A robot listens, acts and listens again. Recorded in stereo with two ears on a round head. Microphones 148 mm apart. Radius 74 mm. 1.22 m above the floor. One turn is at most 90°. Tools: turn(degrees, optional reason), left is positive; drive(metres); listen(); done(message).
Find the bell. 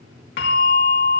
turn(degrees=65, reason="The bell: about 65° left or 115° left.")
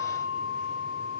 turn(degrees=50, reason="So it is at 50° left.")
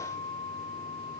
turn(degrees=15, reason="The bell is now 15° left.")
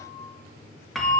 done("Found it: a bell, straight ahead, 2 to 4 m away.")